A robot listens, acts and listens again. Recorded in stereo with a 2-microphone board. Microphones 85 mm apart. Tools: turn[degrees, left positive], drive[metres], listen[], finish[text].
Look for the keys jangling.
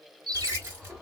Thought: The keys jangling: about 30° right or 150° right.
Action: turn[-30]
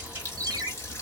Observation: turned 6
Action: listen[]
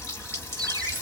Thought: The keys jangling: about 25° right or 155° right.
Action: turn[-25]
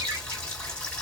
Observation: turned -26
Action: listen[]
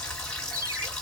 Action: listen[]
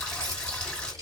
Thought: So it is at 130° right.
Action: turn[-130]
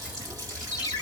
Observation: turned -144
Thought: Nothing new. It was at 15° left.
Action: turn[15]
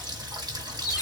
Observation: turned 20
Action: listen[]
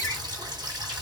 Action: finish[I heard keys jangling from this way, but can't make it out now.]